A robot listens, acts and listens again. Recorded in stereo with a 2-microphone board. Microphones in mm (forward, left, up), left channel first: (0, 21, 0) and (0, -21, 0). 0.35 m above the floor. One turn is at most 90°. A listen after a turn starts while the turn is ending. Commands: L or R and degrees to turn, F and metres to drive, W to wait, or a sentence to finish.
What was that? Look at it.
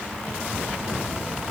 W
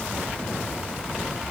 W
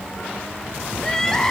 L30
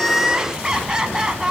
R15
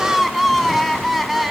Facing the crying.